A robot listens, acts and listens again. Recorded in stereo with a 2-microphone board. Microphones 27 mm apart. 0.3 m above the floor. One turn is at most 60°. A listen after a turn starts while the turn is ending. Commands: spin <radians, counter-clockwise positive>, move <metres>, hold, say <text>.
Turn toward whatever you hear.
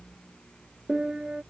spin -0.52
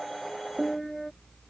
say Facing the piano.